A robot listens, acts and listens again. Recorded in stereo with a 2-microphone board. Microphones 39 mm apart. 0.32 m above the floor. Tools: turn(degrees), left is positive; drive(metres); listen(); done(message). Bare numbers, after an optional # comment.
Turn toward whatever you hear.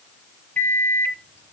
# The microwave: about 45° left or 135° left.
turn(45)
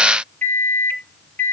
# So it is at 75° left.
turn(75)
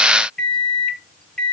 # The microwave is now 20° left.
turn(20)
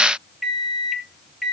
done("Found it: a microwave, straight ahead.")